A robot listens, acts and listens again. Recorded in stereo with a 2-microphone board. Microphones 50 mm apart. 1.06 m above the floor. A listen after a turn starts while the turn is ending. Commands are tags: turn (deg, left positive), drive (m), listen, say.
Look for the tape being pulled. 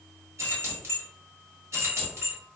<listen/>
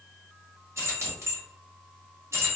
<listen/>
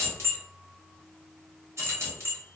<say>I can't make out tape being pulled to turn to.</say>